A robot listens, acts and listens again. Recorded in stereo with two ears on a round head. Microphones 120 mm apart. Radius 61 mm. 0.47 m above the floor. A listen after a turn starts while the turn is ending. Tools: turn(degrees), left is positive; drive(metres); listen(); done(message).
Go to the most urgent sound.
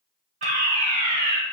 turn(degrees=-55)
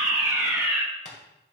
turn(degrees=-15)
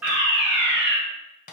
drive(metres=1.0)
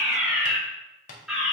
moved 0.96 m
drive(metres=1.0)
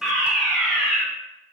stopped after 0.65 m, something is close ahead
done("Arrived at the fire alarm, straight ahead.")